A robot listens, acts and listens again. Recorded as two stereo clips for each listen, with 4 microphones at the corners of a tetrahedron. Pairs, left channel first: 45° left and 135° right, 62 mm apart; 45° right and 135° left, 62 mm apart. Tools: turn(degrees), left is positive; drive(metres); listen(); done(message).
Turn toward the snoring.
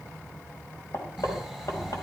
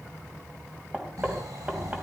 turn(degrees=130)
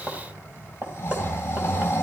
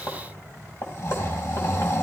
turn(degrees=-10)
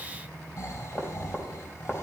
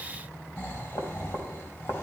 done("Facing the snoring, over 4 m away.")